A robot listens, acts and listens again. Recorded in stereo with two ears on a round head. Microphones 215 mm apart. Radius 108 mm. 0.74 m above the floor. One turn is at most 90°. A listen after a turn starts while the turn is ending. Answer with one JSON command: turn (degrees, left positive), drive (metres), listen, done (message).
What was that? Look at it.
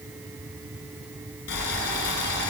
{"turn": 50}
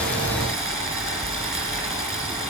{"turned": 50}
{"done": "Facing the boiling."}